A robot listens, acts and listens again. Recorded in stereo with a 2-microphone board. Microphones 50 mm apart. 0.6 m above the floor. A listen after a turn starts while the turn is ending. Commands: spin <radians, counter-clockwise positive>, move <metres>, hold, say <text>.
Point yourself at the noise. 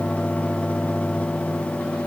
hold
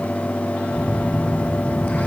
spin 0.52
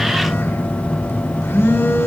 spin 2.09
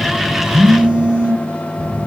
spin -0.44
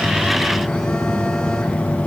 spin 0.17
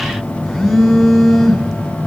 say Found it: a phone buzzing, straight ahead, 2 to 4 m away.